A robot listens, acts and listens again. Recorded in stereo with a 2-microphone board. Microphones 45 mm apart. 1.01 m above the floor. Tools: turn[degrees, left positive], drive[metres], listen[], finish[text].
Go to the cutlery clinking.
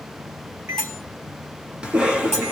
Action: turn[30]
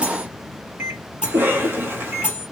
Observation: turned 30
Thought: So it is at 20° right.
Action: turn[-20]
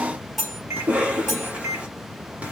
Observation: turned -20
Action: drive[1.0]
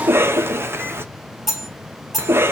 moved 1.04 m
Action: drive[1.0]
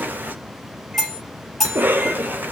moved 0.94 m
Thought: The cutlery clinking is now 10° left.
Action: turn[10]
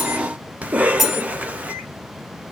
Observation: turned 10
Action: drive[1.0]
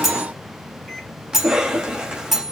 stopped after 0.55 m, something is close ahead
Action: finish[I am next to the cutlery clinking.]